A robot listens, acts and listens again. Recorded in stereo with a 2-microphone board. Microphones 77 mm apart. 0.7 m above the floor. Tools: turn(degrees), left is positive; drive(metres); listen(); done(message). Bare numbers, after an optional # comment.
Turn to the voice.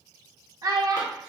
# The child speaking: about 55° right or 125° right.
turn(-55)
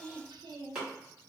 # So it is at 75° right.
turn(-75)
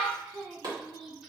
done("Facing the child speaking.")